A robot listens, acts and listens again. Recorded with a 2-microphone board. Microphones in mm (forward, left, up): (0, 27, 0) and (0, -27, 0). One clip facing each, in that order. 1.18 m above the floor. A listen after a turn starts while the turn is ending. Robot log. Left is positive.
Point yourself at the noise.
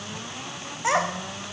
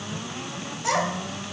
note: The child speaking: about 30° left or 150° left.
cmd yaw +30
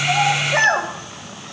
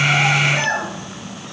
note: So it is at 125° left.
cmd yaw +125
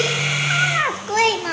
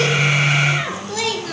note: The child speaking is now 45° left.
cmd yaw +45
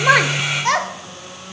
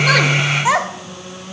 note: The child speaking is now 10° right.
cmd yaw -10
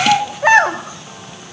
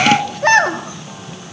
note: The child speaking is now 10° left.
cmd yaw +10
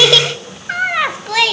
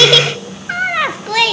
end: Found it: a child speaking, straight ahead, 1 to 2 m away.